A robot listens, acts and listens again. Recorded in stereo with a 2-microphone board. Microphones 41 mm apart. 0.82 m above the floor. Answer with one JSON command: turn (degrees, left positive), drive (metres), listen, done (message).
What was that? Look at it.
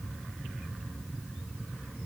{"listen": true}
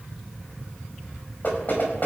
{"turn": 45}
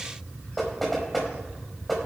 {"done": "Found it: knocking, straight ahead."}